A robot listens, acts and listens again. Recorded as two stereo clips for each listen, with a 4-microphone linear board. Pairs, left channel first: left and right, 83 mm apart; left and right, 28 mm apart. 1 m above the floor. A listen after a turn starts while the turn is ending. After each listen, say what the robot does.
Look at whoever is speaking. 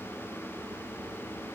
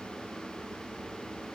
Keep listening.
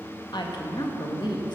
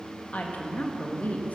Turn 65° left.
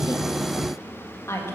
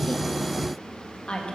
Turn 40° left.
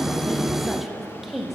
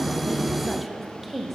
Found it: a woman speaking, straight ahead, 1 to 2 m away.